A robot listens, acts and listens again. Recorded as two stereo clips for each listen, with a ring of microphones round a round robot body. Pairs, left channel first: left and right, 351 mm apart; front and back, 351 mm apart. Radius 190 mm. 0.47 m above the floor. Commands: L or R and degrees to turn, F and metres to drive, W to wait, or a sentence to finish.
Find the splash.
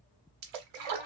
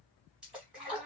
R90
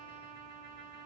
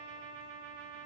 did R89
Facing where the splash came from. I can't hear it now.